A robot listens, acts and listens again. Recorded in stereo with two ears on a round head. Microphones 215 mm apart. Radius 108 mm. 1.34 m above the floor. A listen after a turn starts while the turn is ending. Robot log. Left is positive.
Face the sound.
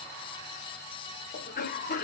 note: The cough: about 40° left or 140° left.
cmd yaw +40
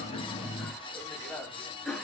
end: Facing the cough.